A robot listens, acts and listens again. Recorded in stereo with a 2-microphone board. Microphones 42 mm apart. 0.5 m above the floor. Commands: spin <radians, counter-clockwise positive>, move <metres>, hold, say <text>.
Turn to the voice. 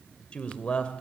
spin 0.44
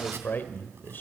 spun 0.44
spin 2.18
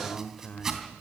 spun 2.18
spin 0.61
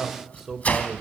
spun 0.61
spin -0.17
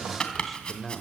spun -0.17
say Found it: a man speaking, straight ahead, 1 to 2 m away.